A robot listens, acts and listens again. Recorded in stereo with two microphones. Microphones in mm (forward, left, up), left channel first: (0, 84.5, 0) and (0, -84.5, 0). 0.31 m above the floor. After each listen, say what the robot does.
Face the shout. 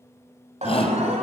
Turn 40° left.
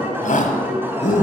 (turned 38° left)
Turn 90° left.
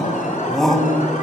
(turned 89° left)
Found it: a shout, straight ahead.